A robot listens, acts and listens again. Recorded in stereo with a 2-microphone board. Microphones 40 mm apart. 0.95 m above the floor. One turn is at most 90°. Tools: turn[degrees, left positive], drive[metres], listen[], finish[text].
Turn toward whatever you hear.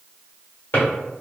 Thought: The drawer: about 50° left or 130° left.
Action: turn[50]
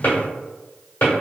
Thought: So it is at 70° left.
Action: turn[70]
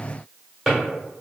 Action: finish[Facing the drawer, 1 to 2 m away.]